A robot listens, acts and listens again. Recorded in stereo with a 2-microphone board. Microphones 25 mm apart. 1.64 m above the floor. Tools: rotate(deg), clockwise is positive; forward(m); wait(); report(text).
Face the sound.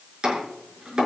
rotate(30)
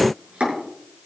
rotate(120)
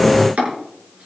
rotate(55)
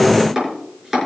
rotate(10)
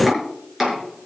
report("Found it: chopping, straight ahead.")